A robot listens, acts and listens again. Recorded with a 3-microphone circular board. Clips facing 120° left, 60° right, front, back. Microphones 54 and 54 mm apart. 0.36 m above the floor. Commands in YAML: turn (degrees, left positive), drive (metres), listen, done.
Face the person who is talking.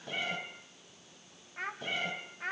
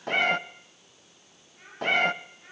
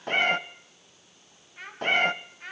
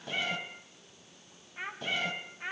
turn: 105
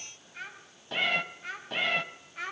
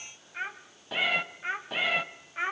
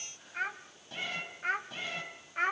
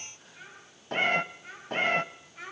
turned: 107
done: "Facing the child speaking."